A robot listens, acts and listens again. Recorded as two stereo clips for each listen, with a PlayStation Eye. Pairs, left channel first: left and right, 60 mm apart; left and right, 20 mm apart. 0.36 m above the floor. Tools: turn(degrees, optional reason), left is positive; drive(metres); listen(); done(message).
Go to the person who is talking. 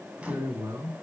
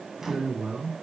turn(degrees=-70, reason="The man speaking: about 70° right or 110° right.")
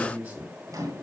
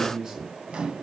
turn(degrees=-30, reason="So it is at 30° right.")
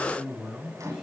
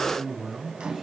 turn(degrees=-10, reason="The man speaking is now 10° right.")
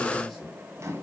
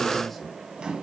listen()
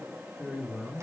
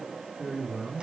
drive(metres=1.0)
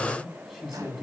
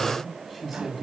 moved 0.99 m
turn(degrees=-10, reason="The man speaking is now 10° right.")
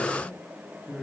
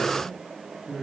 drive(metres=1.0)
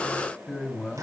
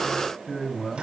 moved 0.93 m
drive(metres=1.0)
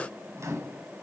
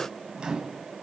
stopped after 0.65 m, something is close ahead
listen()
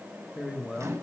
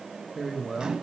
done("I am next to the man speaking.")